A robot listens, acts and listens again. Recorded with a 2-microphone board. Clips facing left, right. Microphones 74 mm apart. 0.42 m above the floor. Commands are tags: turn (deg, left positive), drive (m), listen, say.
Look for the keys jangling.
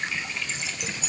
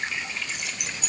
<turn deg="-60"/>
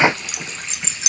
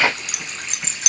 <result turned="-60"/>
<turn deg="-55"/>
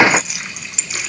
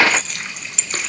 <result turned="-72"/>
<say>Found it: keys jangling, straight ahead, 2 to 4 m away.</say>